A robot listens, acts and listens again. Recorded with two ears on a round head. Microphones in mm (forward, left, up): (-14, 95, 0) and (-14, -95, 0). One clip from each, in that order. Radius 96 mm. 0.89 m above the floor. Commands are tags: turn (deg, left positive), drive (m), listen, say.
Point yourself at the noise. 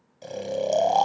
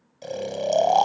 <turn deg="-30"/>
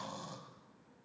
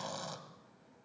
<listen/>
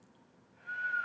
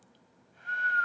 <turn deg="-140"/>
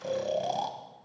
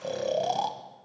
<turn deg="-10"/>
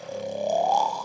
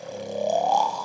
<say>Facing the snoring.</say>